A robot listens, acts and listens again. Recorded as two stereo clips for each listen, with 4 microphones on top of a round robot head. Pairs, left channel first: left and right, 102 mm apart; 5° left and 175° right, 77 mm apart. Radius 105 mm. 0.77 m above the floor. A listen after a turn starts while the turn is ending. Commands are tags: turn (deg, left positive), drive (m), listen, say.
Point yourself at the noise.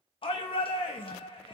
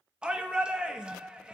<turn deg="110"/>
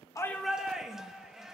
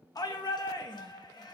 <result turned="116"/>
<say>Found it: a shout, straight ahead.</say>